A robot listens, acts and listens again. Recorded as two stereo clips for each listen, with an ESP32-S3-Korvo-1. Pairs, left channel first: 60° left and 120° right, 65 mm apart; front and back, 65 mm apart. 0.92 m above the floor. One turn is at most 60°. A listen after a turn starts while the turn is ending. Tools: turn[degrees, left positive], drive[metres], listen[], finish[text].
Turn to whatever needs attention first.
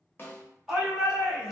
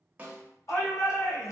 Thought: The shout: 40° right.
Action: turn[-40]
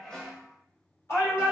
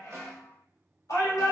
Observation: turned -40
Thought: The shout is now 20° left.
Action: turn[20]
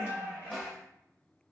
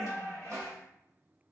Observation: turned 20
Action: finish[Found it: a shout, straight ahead.]